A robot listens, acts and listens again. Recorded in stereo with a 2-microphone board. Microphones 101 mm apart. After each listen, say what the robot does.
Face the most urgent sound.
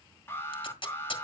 Turn 25° left.
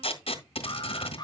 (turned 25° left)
Turn 135° left.
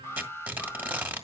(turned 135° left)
Turn 25° left.
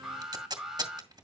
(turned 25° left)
Facing the alarm, 1 to 2 m away.